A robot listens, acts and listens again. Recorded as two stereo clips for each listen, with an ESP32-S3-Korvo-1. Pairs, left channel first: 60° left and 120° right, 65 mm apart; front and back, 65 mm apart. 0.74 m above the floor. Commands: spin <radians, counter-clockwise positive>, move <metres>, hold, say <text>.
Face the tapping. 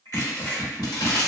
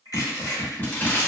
spin -1.31
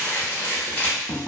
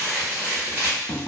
spin -0.17
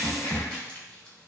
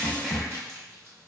say Found it: tapping, straight ahead.